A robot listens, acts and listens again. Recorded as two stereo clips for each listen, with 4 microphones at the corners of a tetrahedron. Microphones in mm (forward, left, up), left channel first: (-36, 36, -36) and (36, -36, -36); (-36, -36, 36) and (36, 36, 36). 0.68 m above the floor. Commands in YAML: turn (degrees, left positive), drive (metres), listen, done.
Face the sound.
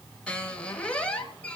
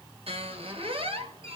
turn: 55
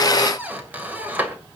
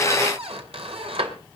turn: 30
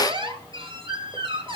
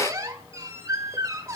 turn: -15
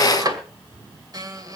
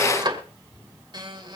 done: "Found it: a squeak, straight ahead, 2 to 4 m away."